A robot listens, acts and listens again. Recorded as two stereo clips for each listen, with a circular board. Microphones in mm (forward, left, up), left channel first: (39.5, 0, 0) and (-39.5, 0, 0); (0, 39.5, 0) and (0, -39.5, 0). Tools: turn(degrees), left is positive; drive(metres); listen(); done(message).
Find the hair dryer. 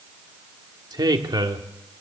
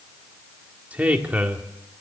listen()
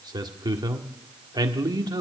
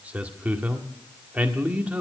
listen()
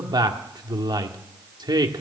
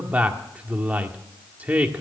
done("I can't make out a hair dryer, only a man speaking.")